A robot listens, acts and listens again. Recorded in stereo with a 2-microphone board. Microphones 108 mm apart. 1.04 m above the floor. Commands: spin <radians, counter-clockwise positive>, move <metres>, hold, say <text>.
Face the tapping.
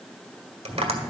spin -1.22
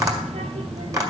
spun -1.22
spin -0.52
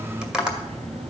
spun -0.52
say Facing the tapping.